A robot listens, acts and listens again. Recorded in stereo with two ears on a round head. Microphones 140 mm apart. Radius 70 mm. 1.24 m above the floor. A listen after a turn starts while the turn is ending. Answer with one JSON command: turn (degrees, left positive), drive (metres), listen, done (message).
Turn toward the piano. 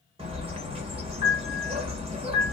{"turn": -30}
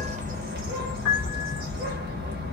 {"turn": -10}
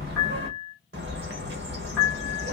{"done": "Found it: a piano, straight ahead, 1 to 2 m away."}